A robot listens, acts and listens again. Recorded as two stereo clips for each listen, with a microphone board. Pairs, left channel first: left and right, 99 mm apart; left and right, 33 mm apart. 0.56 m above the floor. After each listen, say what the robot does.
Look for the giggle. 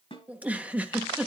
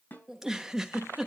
Turn 15° right.
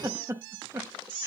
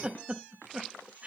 Turn 150° right.
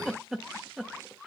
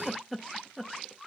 Found it: a giggle, straight ahead.